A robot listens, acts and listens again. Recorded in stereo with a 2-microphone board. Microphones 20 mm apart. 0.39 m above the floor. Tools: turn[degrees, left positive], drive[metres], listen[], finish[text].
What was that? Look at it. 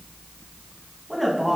Action: turn[30]
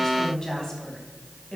Thought: So it is at 145° left.
Action: turn[145]
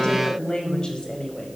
Thought: The woman speaking is now 40° left.
Action: turn[40]
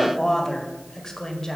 Thought: The woman speaking is now 30° left.
Action: turn[30]
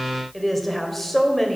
Action: finish[Facing the woman speaking, 1 to 2 m away.]